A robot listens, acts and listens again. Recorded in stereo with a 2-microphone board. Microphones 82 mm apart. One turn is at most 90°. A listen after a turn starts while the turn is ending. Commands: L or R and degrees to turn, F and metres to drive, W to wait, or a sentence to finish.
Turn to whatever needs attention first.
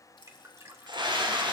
R65
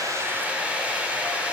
R15
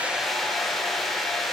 Found it: a scream, straight ahead, 2 to 4 m away.